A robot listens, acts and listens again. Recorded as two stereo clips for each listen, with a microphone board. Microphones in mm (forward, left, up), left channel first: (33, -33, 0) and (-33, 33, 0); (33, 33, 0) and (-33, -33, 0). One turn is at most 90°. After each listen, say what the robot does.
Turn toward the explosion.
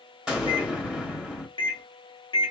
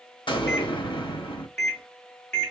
Turn 55° left.
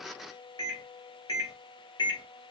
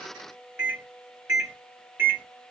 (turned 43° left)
Turn 15° left.
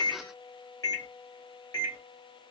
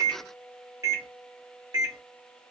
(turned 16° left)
Facing where the explosion came from. I can't hear it now.